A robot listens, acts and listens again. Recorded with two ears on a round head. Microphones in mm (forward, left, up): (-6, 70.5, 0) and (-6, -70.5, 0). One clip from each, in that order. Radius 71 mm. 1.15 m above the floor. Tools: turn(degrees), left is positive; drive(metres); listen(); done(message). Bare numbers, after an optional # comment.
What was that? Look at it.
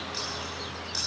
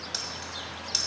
# The keys jangling: about 70° right or 110° right.
turn(-70)
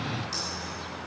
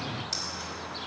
listen()
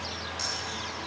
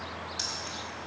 # So it is at 25° right.
turn(-25)
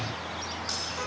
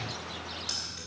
listen()
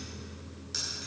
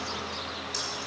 done("Found it: keys jangling, straight ahead, over 4 m away.")